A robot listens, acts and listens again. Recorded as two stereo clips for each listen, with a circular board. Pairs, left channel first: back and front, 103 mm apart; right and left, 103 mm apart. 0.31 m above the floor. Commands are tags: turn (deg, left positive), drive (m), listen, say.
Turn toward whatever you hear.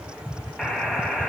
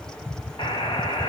<turn deg="-95"/>
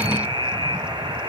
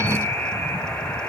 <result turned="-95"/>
<turn deg="-20"/>
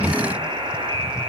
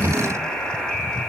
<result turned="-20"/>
<turn deg="-10"/>
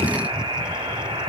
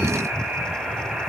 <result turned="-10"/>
<say>Found it: a buzzer, straight ahead, 1 to 2 m away.</say>